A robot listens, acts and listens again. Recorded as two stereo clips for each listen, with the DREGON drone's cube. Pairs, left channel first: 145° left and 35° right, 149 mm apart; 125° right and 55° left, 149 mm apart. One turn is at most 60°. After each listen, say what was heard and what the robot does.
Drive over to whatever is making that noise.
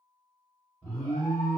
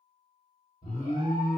The alarm: 135° right. Turn 60° right.
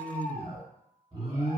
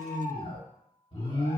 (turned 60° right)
The alarm is now 90° right. Turn 60° right.
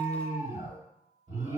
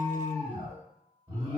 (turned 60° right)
The alarm is now 15° right. Turn 15° right.
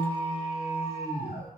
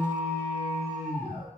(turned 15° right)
Drive 1.0 m forward.
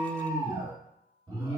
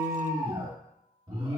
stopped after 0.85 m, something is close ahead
Arrived at the alarm, straight ahead.